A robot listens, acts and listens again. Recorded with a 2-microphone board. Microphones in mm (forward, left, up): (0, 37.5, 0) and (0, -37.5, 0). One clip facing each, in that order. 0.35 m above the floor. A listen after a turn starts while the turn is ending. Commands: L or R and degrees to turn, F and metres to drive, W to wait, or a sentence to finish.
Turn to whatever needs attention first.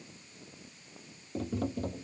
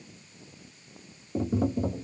W
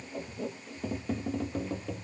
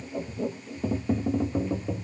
W
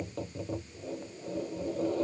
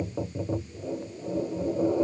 I can't make out anything urgent, only tapping.